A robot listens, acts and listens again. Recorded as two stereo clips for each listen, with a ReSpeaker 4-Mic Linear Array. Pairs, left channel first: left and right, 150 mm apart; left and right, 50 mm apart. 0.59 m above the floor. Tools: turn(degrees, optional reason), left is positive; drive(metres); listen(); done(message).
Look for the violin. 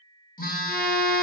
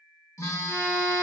turn(degrees=20, reason="The violin: about 20° left or 160° left.")
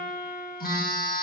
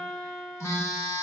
done("Facing the violin.")